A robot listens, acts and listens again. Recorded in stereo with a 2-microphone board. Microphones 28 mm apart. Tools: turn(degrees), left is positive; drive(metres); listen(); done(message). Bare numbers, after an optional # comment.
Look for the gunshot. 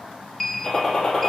# The gunshot: about 20° left or 160° left.
turn(20)
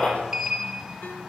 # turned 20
# So it is at 140° left.
turn(140)
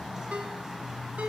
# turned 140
done("I heard a gunshot from this way, but can't make it out now.")